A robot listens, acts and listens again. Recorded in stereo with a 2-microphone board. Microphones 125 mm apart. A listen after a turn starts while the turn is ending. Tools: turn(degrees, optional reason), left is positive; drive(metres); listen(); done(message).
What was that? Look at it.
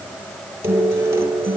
turn(degrees=-20, reason="The guitar: about 20° right or 160° right.")
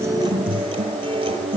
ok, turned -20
turn(degrees=-135, reason="So it is at 135° right.")
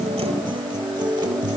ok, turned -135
turn(degrees=-35, reason="The guitar is now 35° right.")
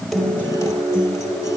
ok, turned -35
turn(degrees=25, reason="The guitar is now 25° left.")
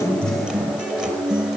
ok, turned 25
done("Found it: a guitar, straight ahead, over 4 m away.")